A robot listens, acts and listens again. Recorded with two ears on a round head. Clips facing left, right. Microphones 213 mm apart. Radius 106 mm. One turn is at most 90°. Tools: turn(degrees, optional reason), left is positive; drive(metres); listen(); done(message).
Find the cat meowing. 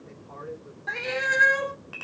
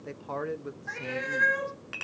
turn(degrees=55, reason="The cat meowing: about 55° left or 125° left.")
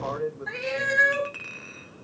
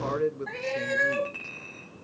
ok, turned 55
turn(degrees=20, reason="So it is at 20° left.")
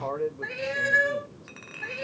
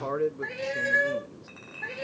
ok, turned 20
turn(degrees=10, reason="The cat meowing is now 10° left.")
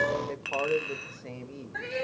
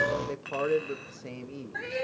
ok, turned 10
done("Facing the cat meowing.")